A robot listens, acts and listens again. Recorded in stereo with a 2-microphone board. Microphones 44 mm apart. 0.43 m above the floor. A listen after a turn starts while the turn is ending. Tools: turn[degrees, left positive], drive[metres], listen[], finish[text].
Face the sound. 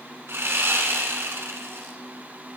Thought: The sawing: about 75° right or 105° right.
Action: turn[-75]
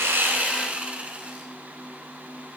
Thought: So it is at 30° right.
Action: turn[-30]
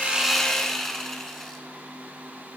Thought: The sawing is now 10° left.
Action: turn[10]
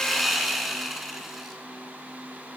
Action: finish[Facing the sawing, 1 to 2 m away.]